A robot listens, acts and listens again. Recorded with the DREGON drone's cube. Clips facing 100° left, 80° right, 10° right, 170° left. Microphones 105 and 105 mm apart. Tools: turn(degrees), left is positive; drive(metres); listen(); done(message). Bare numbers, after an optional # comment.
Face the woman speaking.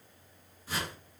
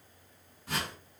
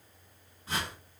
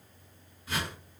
listen()
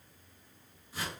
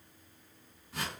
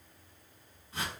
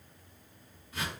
listen()
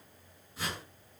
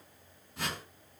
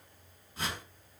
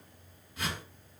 done("I can't make out a woman speaking, only a whoosh.")